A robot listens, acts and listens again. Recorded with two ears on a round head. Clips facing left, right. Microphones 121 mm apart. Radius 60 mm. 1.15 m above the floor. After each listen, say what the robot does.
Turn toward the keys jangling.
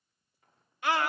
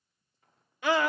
Keep listening.
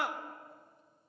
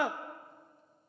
Keep listening.
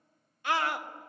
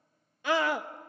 I can't make out keys jangling, only a scream.